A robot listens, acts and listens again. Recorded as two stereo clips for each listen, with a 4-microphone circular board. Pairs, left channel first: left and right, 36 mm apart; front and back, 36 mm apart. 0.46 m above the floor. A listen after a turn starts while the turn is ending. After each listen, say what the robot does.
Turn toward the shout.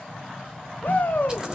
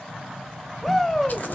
Turn 90° left.
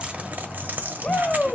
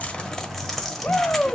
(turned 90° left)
Turn 40° left.
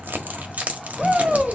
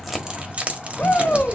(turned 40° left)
Turn 10° right.
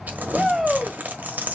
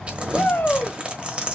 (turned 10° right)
Found it: a shout, straight ahead, 1 to 2 m away.